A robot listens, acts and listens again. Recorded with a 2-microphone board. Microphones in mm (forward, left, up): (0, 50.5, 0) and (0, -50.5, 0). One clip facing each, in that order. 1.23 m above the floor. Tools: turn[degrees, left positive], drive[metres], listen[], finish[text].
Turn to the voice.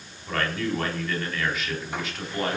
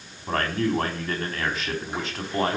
Thought: The man speaking: about 35° right or 145° right.
Action: turn[-35]
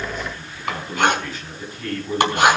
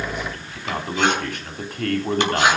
Thought: So it is at 115° right.
Action: turn[-115]
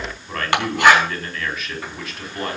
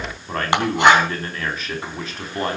Thought: The man speaking is now 35° right.
Action: turn[-35]
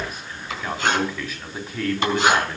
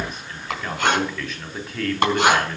Action: finish[Facing the man speaking, over 4 m away.]